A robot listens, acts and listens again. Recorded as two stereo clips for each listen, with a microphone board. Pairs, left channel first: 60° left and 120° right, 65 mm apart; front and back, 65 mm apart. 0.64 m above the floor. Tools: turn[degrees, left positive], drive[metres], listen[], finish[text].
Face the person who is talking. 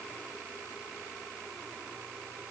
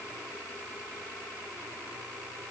Action: listen[]
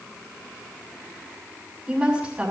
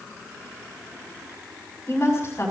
Thought: The woman speaking: 45° right.
Action: turn[-45]
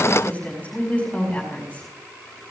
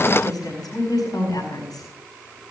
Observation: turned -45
Thought: The woman speaking is now 10° right.
Action: turn[-10]
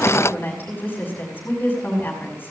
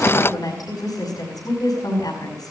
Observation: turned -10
Action: finish[Found it: a woman speaking, straight ahead.]